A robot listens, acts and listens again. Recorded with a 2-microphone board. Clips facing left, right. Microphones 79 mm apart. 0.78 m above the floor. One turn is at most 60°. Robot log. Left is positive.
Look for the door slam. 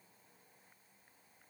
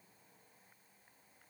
cmd idle
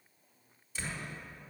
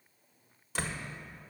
note: The door slam: about 75° right or 105° right.
cmd yaw -60
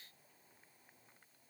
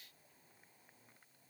cmd idle
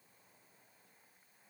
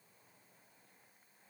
end: I heard a door slam, but can't make it out now. It was about 15° right or 45° right.